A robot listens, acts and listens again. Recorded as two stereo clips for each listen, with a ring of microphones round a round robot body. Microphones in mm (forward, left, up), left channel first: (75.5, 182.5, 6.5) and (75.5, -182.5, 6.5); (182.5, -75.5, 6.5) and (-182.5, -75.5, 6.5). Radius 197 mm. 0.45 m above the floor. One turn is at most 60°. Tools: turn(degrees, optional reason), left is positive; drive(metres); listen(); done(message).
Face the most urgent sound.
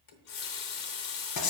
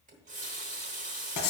listen()
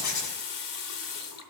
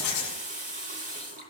listen()
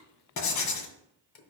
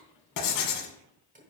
done("I can't make out anything urgent, only writing and a running tap.")